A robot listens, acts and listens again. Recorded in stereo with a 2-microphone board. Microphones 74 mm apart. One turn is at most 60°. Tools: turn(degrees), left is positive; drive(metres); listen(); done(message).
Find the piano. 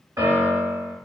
turn(degrees=-50)
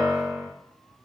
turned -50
done("Facing the piano.")